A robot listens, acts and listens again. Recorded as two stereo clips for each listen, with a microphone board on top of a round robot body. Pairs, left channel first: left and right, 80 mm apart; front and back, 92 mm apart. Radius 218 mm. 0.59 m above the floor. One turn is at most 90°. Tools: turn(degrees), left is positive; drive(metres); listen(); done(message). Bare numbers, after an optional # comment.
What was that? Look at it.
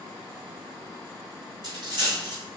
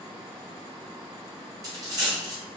# The dropped coin: 125° right.
turn(-90)
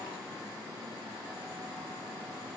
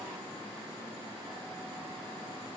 # Nothing new. It was at 35° right.
turn(-35)
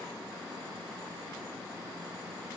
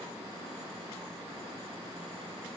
done("I heard a dropped coin from this way, but can't make it out now.")